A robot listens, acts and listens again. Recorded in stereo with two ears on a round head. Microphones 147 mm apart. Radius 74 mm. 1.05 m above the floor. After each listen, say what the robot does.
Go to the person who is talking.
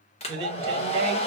Turn 35° right.
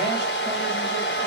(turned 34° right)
Keep listening.
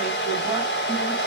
Keep listening.
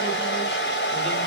I heard a man speaking, but can't make it out now. It was about straight ahead or 110° right. I did not reach it.